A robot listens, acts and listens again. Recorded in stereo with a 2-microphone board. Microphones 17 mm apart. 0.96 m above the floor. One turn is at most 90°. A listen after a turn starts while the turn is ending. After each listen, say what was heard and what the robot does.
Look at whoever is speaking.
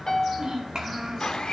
The child speaking: about 50° right or 130° right. Turn 50° right.
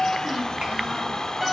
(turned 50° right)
Keep listening.
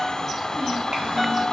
Keep listening.
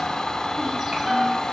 I heard a child speaking, but can't make it out now. It was about straight ahead or 80° right.